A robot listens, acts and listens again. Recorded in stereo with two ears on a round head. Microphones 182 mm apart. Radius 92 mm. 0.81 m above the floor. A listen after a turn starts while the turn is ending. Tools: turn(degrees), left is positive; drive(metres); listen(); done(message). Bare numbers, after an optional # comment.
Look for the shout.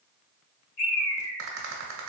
listen()
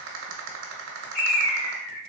listen()
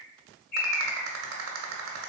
done("I can't make out a shout to turn to.")